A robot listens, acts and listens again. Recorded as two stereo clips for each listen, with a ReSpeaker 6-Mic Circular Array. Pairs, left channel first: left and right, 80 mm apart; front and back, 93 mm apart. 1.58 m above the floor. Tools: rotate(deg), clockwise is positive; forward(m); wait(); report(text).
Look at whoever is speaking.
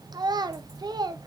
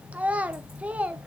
rotate(105)
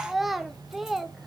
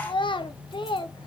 report("Found it: a child speaking, straight ahead.")